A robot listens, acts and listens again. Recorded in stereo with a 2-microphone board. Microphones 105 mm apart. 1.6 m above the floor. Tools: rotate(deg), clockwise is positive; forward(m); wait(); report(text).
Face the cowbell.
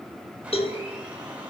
rotate(-70)
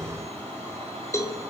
rotate(-30)
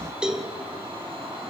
report("Facing the cowbell, 2 to 4 m away.")